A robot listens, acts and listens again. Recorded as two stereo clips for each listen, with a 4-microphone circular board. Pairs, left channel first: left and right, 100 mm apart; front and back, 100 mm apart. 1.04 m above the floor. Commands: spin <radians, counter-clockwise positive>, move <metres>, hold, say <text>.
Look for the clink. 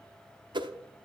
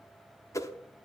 hold
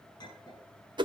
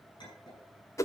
spin 0.79
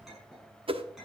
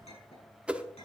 say Found it: a clink, straight ahead.